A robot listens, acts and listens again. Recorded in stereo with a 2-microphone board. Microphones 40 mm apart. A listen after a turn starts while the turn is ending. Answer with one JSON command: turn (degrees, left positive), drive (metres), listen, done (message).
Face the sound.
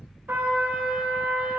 {"turn": -65}
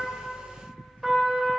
{"done": "Facing the trumpet."}